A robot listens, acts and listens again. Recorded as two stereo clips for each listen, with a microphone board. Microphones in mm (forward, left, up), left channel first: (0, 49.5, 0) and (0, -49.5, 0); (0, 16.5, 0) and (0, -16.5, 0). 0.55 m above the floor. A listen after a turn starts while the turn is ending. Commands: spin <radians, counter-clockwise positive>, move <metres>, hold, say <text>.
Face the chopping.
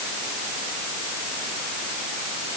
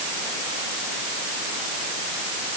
hold
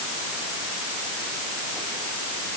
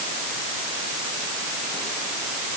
hold
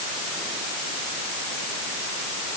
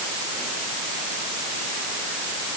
say I can't make out chopping to turn to.